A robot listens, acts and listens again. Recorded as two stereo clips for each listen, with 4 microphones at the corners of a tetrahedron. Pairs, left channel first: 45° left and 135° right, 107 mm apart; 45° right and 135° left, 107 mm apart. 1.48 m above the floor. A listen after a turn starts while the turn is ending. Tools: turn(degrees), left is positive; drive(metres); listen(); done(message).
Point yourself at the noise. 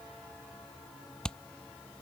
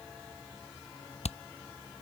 turn(degrees=-40)
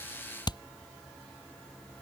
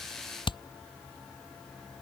done("Found it: hammering, straight ahead.")